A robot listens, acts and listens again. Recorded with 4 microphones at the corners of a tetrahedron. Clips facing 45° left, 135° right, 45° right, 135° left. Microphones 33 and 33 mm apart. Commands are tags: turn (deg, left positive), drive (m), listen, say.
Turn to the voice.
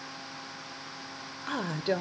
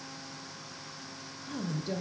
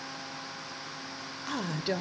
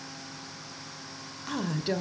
<turn deg="35"/>
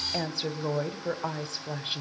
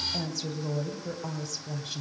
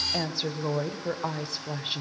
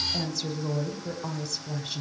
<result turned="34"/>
<say>Found it: a woman speaking, straight ahead.</say>